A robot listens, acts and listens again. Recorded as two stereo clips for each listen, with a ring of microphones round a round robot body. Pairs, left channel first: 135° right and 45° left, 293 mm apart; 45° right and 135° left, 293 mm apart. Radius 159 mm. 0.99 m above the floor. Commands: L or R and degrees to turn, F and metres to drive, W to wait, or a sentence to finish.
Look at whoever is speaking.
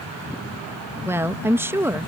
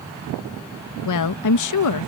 R35
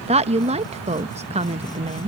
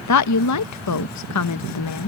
R25
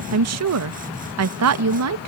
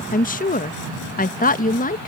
L15
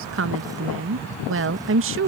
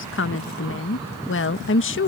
Facing the woman speaking.